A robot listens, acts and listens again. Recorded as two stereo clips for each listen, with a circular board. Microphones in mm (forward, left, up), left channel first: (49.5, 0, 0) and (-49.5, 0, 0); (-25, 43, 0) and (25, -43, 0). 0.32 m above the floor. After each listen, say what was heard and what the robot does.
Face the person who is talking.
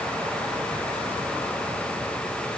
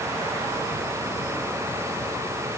Keep listening.
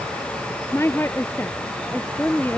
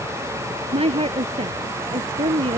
The woman speaking: 70° right. Turn 70° right.
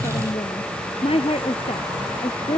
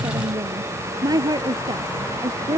The woman speaking is now 10° right. Turn 10° right.
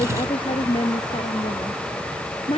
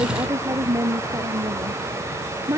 Facing the woman speaking.